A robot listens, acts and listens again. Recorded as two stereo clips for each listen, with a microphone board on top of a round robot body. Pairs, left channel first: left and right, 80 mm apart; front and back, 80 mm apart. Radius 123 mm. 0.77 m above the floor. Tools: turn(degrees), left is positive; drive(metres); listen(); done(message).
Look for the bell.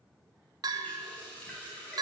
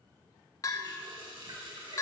turn(degrees=-50)
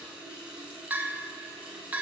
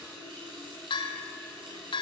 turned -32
turn(degrees=-15)
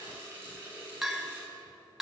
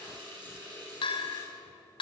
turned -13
done("Facing the bell.")